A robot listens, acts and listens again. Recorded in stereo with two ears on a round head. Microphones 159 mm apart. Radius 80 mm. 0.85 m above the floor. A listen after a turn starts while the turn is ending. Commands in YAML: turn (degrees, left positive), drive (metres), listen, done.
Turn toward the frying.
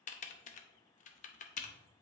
listen: true
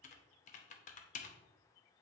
listen: true
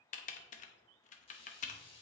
turn: 35
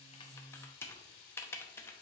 turn: 110
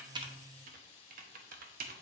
turn: 35
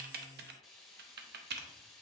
done: "Found it: frying, straight ahead."